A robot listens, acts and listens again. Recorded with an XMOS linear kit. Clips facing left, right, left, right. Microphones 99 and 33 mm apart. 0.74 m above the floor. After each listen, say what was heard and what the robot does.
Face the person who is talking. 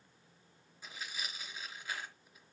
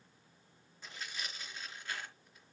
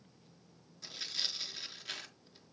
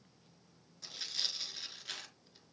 Keep listening.
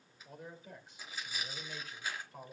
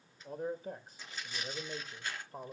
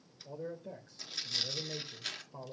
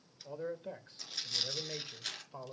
The man speaking: about 35° right or 145° right. Turn 35° right.
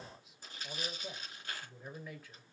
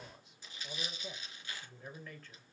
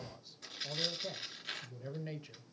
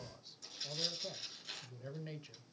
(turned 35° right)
So it is at 10° left. Turn 10° left.
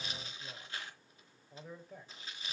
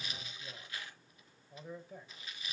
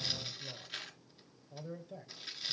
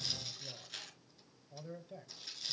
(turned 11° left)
Facing the man speaking, 2 to 4 m away.